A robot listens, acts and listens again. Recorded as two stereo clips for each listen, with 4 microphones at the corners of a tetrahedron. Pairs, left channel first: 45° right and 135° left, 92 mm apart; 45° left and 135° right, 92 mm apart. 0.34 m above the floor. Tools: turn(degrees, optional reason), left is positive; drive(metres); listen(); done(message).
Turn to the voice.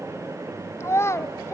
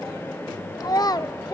turn(degrees=10, reason="The child speaking: 10° left.")
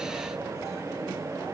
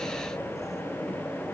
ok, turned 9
listen()
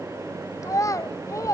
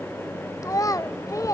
done("Found it: a child speaking, straight ahead.")